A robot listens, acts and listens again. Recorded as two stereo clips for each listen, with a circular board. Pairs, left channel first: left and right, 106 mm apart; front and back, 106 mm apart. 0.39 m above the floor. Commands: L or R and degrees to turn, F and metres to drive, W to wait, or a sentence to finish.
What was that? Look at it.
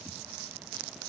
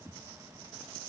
W
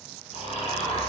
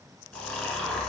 L80
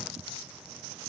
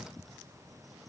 W
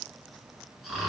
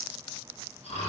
Found it: snoring, straight ahead, 1 to 2 m away.